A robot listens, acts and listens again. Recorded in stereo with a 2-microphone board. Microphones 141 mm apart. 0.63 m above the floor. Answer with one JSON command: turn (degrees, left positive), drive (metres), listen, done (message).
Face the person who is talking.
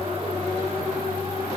{"listen": true}
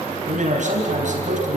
{"turn": -60}
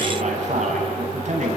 {"turn": -55}
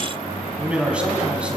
{"turn": -10}
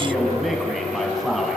{"done": "Facing the man speaking."}